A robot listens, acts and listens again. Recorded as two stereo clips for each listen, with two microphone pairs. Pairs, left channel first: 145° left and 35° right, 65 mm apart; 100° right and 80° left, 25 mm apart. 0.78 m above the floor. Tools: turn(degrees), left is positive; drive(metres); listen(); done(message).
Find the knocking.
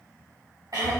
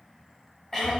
listen()
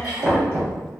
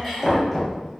turn(degrees=10)
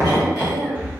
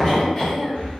done("Facing the knocking, 1 to 2 m away.")